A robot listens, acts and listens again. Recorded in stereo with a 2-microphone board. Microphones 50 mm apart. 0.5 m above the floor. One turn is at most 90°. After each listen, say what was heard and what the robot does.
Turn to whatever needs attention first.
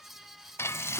Keep listening.
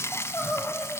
The crying: about 25° left or 155° left. Turn 25° left.
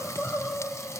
So it is at 125° left. Turn 90° left.
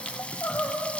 The crying is now 60° left. Turn 60° left.
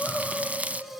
Facing the crying.